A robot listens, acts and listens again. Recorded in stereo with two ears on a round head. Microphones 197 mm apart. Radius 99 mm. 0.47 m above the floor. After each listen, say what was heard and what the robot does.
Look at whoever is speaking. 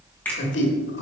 The man speaking: about 55° left or 125° left. Turn 55° left.
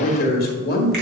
So it is at 55° left. Turn 55° left.
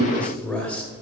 Found it: a man speaking, straight ahead, 1 to 2 m away.